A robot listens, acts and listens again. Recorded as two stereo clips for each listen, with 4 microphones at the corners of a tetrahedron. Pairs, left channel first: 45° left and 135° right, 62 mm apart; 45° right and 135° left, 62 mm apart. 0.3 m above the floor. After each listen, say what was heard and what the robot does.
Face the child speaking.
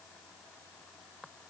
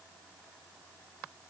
Keep listening.
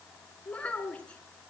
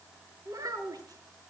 The child speaking: 115° left. Turn 115° left.
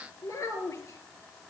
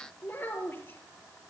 The child speaking is now 10° left. Turn 10° left.
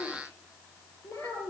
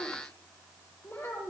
Facing the child speaking.